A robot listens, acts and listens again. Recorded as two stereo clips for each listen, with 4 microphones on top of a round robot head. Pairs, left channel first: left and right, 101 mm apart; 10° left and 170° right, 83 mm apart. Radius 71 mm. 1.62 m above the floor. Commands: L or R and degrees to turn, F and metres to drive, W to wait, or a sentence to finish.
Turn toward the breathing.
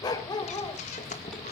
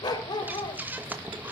L120
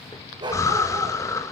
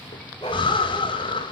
L30
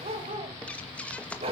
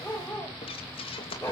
L10
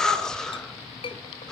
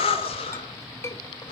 Facing the breathing, 2 to 4 m away.